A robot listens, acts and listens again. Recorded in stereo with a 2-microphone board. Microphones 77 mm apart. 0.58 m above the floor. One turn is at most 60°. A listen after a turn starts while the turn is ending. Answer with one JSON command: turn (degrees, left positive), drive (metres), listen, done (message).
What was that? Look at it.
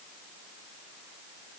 {"listen": true}
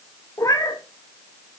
{"turn": 50}
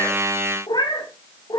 {"turn": 60}
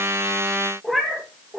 {"done": "Facing the cat meowing."}